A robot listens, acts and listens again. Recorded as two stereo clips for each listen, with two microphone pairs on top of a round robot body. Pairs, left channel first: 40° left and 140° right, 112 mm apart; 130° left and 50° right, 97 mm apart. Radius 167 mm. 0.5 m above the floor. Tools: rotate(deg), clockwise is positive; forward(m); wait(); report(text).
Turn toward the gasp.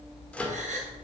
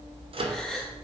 rotate(145)
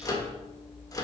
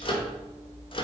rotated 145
report("I heard a gasp from this way, but can't make it out now.")